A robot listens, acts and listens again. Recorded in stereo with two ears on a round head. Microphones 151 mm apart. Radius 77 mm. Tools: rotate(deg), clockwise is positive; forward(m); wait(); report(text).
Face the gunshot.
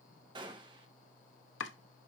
rotate(25)
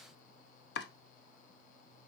wait()
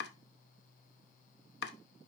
report("I heard a gunshot, but can't make it out now. It was about straight ahead or 130° right.")